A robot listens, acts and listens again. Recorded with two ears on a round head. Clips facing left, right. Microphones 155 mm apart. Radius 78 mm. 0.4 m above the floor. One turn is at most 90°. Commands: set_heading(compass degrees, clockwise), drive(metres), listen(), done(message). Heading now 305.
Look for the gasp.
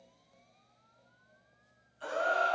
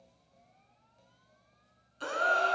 set_heading(35)
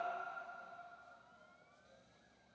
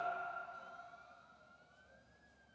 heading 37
done("Facing where the gasp came from. I can't hear it now.")